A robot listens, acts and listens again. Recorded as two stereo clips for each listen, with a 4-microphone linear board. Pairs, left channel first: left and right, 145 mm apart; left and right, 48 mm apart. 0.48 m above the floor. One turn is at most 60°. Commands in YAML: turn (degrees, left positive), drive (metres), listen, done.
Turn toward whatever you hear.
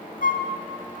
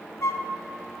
turn: 60
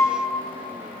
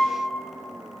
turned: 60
turn: 20
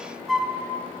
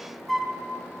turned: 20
done: "Facing the flute."